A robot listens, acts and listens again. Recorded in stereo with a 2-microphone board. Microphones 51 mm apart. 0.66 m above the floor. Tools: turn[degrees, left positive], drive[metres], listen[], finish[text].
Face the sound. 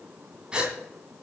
Thought: The gasp: about 20° right or 160° right.
Action: turn[-20]
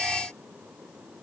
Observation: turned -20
Action: listen[]
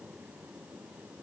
Action: finish[I heard a gasp, but can't make it out now. It was about straight ahead or 140° right.]